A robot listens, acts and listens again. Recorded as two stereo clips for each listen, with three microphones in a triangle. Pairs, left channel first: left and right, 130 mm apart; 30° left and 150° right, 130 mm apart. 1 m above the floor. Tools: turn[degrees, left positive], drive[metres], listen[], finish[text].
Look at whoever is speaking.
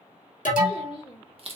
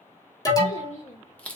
Thought: The child speaking: 45° left.
Action: turn[45]
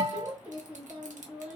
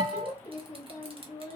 Thought: The child speaking is now 10° right.
Action: turn[-10]
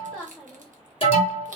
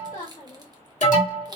Action: finish[Facing the child speaking.]